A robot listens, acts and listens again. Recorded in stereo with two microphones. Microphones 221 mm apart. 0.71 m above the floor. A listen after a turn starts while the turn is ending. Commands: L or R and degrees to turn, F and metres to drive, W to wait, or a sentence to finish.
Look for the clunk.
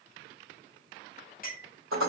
W
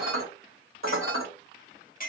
W
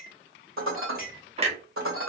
R30
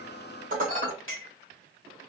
W
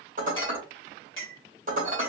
I heard a clunk, but can't make it out now. It was about straight ahead or 120° right.